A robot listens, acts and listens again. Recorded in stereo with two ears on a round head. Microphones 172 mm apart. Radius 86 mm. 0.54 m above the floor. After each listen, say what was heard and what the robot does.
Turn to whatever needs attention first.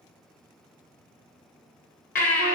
The baby crying: about 45° left or 135° left. Turn 45° left.
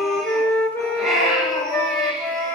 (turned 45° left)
Facing the baby crying.